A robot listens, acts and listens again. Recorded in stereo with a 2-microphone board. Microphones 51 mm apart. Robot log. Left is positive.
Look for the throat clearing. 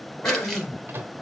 note: The throat clearing: about 50° left or 130° left.
cmd yaw +50
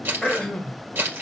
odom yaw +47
note: So it is at 10° left.
cmd yaw +10
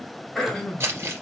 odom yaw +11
end: Found it: throat clearing, straight ahead, 1 to 2 m away.